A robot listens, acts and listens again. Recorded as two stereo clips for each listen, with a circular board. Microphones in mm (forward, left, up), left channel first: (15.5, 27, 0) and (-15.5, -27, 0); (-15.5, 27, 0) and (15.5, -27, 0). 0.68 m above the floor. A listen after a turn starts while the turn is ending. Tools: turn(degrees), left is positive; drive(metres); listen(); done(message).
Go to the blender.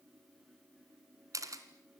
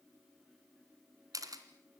listen()
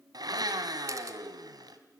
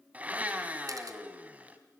turn(degrees=-125)
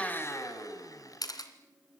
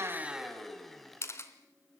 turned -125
turn(degrees=35)
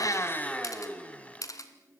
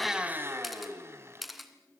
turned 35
turn(degrees=-10)
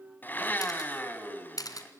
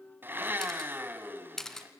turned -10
drive(metres=1.0)
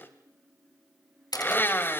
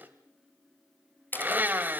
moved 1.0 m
drive(metres=1.0)
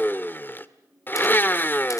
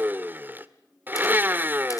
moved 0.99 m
drive(metres=1.0)
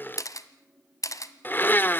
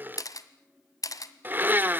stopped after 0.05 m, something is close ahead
done("I am next to the blender.")